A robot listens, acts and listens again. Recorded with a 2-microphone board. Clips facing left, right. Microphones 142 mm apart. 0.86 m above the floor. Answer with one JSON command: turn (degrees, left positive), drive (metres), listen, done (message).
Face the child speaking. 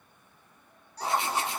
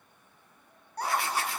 {"turn": -55}
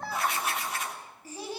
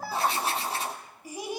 {"turn": -15}
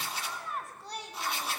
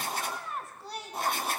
{"done": "Facing the child speaking."}